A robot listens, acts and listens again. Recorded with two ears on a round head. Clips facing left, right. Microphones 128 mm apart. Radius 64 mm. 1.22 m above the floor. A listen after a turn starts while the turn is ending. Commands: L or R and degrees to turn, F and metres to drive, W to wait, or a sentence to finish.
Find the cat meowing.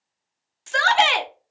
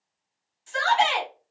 W
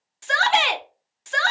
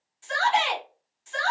W
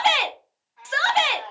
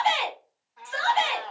R55
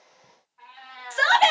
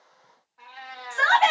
R55
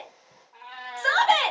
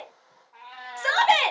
Found it: a cat meowing, straight ahead, under 1 m away.